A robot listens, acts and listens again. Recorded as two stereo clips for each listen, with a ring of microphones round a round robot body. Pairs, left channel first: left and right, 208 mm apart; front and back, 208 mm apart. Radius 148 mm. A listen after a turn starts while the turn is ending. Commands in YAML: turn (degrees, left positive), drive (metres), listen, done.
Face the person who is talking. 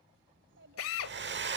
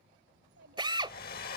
turn: -130
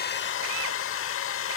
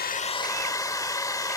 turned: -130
listen: true
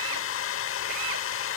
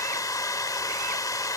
listen: true
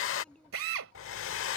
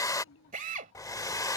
done: "Facing the child speaking."